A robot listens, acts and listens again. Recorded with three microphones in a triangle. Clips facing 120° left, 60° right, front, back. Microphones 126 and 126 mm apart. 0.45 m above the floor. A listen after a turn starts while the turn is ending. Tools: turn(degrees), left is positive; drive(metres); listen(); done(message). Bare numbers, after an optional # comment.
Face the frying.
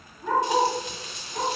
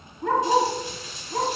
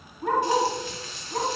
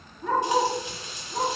# The frying: 110° left.
turn(110)
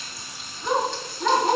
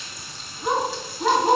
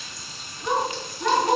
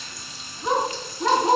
listen()
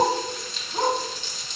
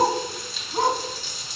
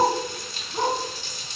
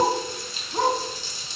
# The frying is now 25° left.
turn(25)
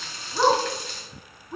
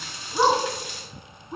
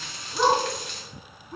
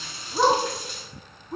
# The frying is now 15° left.
turn(15)
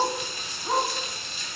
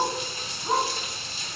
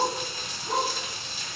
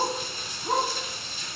done("Facing the frying, 1 to 2 m away.")